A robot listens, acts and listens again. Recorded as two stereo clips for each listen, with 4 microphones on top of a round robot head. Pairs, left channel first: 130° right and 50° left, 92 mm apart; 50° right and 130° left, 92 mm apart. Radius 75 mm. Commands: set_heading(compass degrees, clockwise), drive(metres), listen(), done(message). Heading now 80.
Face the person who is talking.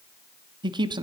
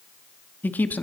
set_heading(60)
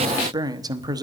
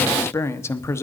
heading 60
set_heading(50)
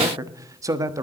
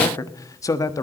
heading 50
done("Found it: a man speaking, straight ahead.")